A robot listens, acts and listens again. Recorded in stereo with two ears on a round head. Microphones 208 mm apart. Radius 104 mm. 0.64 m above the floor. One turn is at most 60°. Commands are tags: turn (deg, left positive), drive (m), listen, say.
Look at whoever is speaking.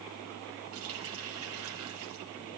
<listen/>
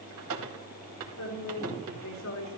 <turn deg="60"/>
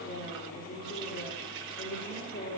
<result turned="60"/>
<turn deg="55"/>
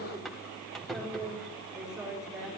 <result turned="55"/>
<say>Facing the woman speaking.</say>